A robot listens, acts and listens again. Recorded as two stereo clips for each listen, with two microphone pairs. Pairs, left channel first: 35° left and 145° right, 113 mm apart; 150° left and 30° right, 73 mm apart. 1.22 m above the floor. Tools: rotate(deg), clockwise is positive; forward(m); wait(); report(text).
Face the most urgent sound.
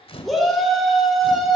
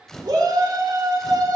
rotate(55)
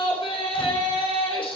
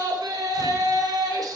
report("Facing the shout, 2 to 4 m away.")